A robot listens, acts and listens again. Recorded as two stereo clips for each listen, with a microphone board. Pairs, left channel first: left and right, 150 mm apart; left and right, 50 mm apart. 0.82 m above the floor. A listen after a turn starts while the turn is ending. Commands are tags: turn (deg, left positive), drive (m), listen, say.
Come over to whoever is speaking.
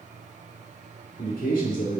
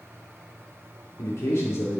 <turn deg="70"/>
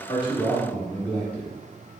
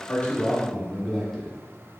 <turn deg="10"/>
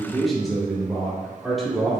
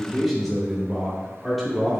<drive m="1.0"/>
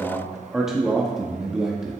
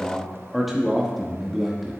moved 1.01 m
<drive m="1.0"/>
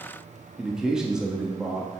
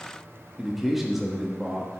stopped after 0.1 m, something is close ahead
<say>I am next to the man speaking.</say>